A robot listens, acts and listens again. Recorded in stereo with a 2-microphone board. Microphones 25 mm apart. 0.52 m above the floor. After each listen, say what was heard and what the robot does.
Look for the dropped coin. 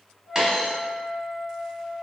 The dropped coin: about 25° right or 155° right. Turn 25° right.
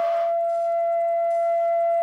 Keep listening.
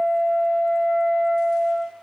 I heard a dropped coin, but can't make it out now. It was about straight ahead or 130° right.